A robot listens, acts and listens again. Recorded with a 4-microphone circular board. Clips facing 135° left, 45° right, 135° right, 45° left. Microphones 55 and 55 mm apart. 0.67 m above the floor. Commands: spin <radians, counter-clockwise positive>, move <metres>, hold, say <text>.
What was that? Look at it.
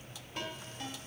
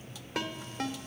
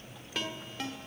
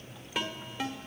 spin -0.61
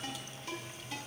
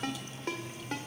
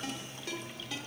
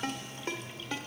spin -0.17
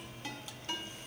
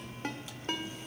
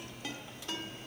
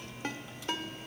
say Facing the ringtone.